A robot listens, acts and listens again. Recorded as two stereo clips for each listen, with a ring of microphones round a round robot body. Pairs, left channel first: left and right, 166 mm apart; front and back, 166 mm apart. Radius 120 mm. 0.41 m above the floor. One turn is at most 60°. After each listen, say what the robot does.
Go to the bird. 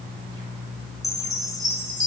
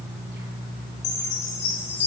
Keep listening.
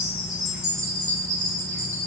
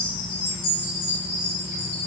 Keep listening.
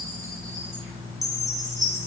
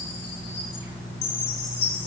I can't make out a bird to turn to.